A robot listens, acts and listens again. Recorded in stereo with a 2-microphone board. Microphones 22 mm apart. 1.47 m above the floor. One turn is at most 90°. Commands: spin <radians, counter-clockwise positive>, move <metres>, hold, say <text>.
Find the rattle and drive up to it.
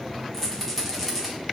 spin 0.52
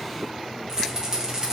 spin -0.52
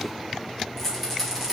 move 1.0
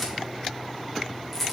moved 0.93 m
move 1.0
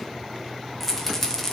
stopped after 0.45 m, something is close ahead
spin 0.17
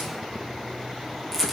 say Arrived at the rattle, straight ahead.